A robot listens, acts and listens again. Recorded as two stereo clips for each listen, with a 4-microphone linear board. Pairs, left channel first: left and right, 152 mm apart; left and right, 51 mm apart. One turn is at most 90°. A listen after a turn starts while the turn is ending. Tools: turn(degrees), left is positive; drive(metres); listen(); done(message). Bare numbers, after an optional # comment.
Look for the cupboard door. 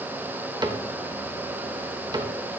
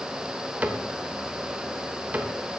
# The cupboard door: about 25° right or 155° right.
turn(-25)
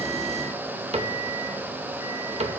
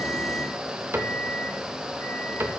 # So it is at 125° right.
turn(-90)
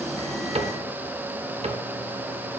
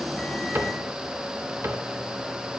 # The cupboard door is now 55° right.
turn(-55)
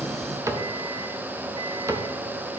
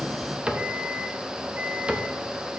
# The cupboard door is now 25° right.
turn(-25)
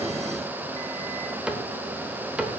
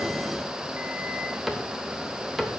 # The cupboard door is now 10° right.
turn(-10)
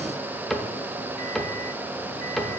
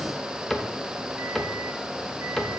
done("Found it: a cupboard door, straight ahead, 1 to 2 m away.")